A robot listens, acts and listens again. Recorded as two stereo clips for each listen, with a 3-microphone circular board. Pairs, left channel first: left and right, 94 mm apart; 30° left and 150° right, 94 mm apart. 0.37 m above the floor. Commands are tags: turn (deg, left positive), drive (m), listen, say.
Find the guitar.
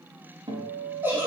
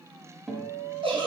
<turn deg="-65"/>
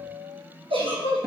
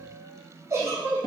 <say>Found it: a guitar, straight ahead.</say>